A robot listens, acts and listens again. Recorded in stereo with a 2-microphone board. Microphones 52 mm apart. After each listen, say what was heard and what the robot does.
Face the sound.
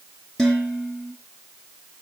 Turn 30° left.
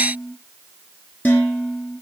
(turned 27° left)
So it is at 140° left. Turn 140° left.
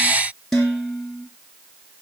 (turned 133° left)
Facing the dishes clattering, over 4 m away.